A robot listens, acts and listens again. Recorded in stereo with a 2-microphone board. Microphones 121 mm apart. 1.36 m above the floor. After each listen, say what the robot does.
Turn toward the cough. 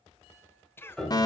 Turn 20° left.
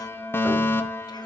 Keep listening.
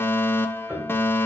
Keep listening.
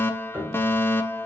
I heard a cough, but can't make it out now. It was about straight ahead or 140° left.